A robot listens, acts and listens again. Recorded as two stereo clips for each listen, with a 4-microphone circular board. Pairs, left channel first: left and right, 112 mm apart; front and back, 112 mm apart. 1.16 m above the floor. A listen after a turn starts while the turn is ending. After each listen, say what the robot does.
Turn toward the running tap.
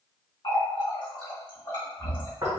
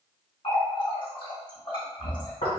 Turn 45° left.
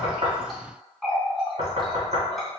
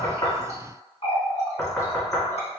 Facing the running tap.